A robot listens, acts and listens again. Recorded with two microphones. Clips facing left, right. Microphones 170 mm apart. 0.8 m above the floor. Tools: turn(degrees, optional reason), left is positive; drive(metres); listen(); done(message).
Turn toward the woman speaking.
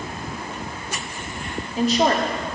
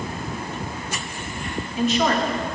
turn(degrees=35, reason="The woman speaking: about 35° left or 145° left.")
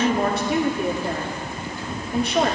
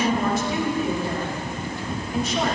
turn(degrees=105, reason="So it is at 105° left.")
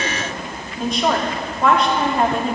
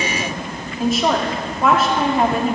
done("Facing the woman speaking.")